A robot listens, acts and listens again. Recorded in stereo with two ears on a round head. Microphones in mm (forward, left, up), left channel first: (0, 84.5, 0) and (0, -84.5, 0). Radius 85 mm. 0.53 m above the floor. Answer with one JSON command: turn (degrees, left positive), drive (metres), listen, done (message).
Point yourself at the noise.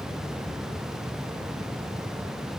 {"listen": true}
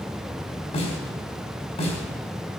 {"turn": 30}
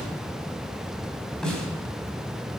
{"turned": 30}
{"done": "Facing the snare drum."}